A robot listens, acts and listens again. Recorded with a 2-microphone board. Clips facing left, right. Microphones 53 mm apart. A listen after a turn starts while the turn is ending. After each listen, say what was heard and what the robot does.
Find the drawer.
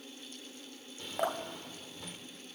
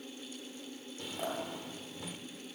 Turn 30° right.
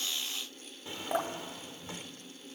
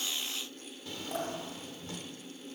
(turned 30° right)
So it is at 25° left. Turn 25° left.
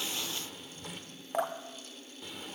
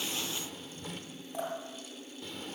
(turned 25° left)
Found it: a drawer, straight ahead.